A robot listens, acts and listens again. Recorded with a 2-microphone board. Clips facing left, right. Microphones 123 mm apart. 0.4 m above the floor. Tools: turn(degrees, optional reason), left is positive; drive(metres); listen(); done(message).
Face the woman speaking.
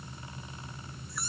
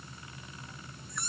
listen()
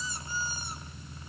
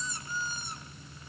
listen()
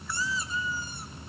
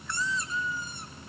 done("I can't make out a woman speaking, only a squeak.")